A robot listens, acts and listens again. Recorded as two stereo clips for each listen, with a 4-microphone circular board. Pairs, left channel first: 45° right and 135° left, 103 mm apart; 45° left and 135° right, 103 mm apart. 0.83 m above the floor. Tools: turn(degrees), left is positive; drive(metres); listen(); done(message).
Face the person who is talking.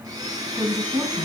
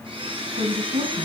turn(degrees=-145)
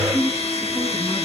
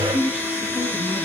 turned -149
done("Facing the woman speaking, over 4 m away.")